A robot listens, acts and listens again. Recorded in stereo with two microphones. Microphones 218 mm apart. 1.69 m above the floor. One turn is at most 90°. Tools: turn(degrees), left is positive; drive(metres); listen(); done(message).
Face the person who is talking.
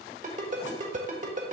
listen()
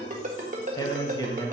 turn(degrees=15)
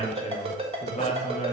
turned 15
turn(degrees=90)
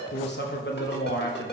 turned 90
turn(degrees=55)
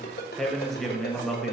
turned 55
done("Facing the man speaking.")